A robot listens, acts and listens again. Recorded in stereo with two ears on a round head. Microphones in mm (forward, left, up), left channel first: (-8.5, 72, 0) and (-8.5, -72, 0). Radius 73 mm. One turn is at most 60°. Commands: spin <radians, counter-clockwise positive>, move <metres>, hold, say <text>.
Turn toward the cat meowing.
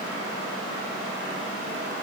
hold
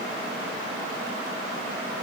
hold
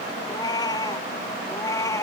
spin 0.35
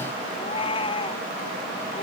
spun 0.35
spin 0.61
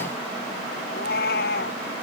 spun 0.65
spin 1.05
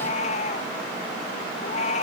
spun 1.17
spin 0.70
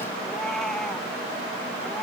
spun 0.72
hold
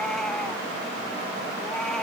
hold
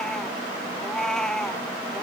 say Facing the cat meowing.